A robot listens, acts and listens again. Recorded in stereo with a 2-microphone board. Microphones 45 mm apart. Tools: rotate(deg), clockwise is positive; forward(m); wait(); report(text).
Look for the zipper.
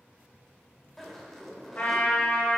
rotate(-30)
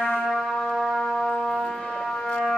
wait()
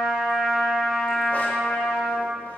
wait()
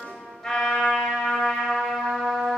report("I heard a zipper, but can't make it out now. It was about 25° right or 145° left.")